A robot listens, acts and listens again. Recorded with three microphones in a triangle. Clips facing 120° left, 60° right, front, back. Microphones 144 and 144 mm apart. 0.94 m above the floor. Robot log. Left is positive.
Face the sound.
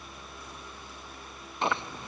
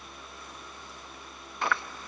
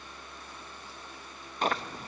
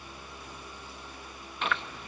note: The chewing: 55° left.
cmd yaw +55
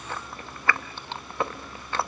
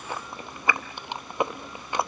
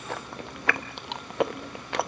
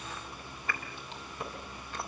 note: The chewing is now 15° left.
cmd yaw +15
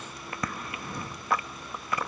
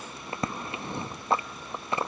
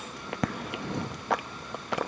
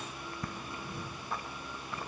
end: Found it: chewing, straight ahead, under 1 m away.